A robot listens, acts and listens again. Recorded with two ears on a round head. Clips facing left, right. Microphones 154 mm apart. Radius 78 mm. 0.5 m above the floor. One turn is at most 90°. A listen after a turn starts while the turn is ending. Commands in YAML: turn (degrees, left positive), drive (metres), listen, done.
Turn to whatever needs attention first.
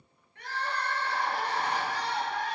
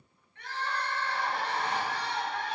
turn: 35
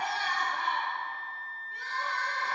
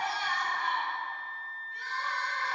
turn: 90
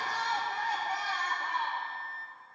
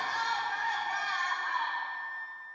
turn: 25
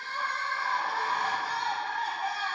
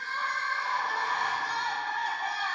done: "Found it: crying, straight ahead, 2 to 4 m away."